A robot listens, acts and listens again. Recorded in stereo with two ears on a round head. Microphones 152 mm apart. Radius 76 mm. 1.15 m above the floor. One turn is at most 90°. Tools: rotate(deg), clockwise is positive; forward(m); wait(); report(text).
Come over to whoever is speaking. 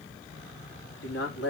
rotate(-90)
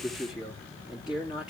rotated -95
forward(1.0)
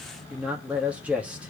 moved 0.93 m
rotate(10)
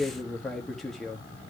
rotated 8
forward(1.0)
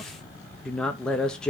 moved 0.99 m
forward(1.0)
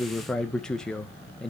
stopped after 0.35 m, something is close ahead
report("I am next to the man speaking.")